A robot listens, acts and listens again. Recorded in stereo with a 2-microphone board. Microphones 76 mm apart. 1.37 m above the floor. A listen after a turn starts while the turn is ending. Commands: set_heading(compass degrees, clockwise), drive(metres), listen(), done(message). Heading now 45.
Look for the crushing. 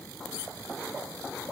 listen()
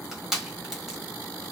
set_heading(75)
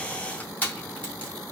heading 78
set_heading(53)
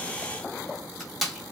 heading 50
done("Facing the crushing.")